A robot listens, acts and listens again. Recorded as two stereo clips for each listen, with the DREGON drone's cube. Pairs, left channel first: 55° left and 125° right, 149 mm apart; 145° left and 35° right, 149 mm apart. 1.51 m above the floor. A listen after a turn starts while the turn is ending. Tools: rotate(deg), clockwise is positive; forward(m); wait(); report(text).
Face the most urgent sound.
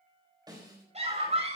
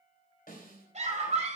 rotate(80)
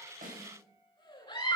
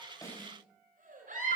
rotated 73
report("Facing the scream, over 4 m away.")